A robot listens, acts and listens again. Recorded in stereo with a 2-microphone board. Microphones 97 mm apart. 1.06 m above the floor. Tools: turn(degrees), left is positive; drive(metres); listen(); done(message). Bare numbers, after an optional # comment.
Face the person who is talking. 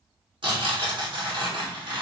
listen()
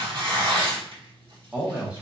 turn(-30)
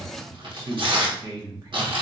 # So it is at 135° right.
turn(-135)
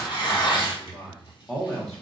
done("Found it: a man speaking, straight ahead, under 1 m away.")